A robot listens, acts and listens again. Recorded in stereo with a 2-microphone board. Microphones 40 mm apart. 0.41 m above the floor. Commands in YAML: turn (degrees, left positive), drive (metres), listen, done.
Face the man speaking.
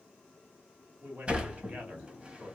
turn: -40
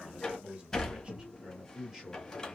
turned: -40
turn: -10
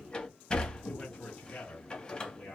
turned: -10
turn: 20
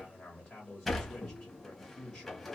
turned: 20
turn: 10
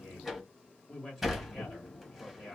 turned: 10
done: "Facing the man speaking, 1 to 2 m away."